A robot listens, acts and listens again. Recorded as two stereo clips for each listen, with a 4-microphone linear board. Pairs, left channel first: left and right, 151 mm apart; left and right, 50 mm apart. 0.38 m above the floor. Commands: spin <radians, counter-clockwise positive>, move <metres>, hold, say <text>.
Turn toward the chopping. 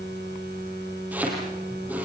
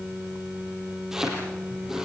spin -0.52
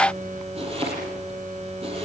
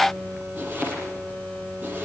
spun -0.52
spin -2.44
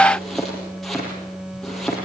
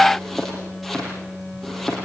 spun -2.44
say Facing the chopping.